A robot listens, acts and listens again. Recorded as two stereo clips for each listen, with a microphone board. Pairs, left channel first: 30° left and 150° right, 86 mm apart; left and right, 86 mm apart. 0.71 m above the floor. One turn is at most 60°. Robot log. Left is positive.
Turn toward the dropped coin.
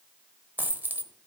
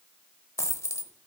note: The dropped coin: 145° left.
cmd yaw +60
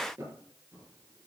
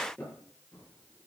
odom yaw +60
note: Nothing new. It was at 85° left.
cmd yaw +60
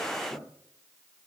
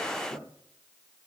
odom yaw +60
note: Nothing new. It was at 25° left.
cmd yaw +25
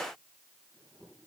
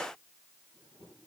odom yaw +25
end: I heard a dropped coin from this way, but can't make it out now.